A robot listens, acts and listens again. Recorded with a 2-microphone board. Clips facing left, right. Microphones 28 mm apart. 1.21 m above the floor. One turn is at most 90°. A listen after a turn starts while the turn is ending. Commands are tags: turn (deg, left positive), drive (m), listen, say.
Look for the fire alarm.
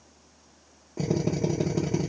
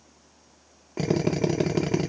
<listen/>
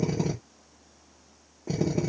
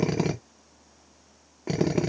<listen/>
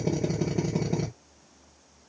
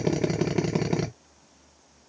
<say>I can't make out a fire alarm to turn to.</say>